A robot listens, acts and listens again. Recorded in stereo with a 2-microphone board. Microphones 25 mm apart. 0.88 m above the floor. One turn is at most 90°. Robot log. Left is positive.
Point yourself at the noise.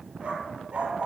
note: The dog barking: about 60° right or 120° right.
cmd yaw -60
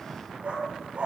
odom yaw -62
note: So it is at 55° right.
cmd yaw -55
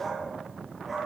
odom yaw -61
end: Found it: a dog barking, straight ahead.